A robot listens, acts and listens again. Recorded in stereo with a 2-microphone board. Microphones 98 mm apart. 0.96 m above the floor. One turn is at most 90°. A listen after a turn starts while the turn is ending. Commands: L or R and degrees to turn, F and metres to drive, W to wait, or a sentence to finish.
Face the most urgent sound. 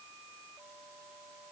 W
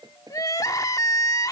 L35
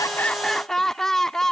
Found it: crying, straight ahead.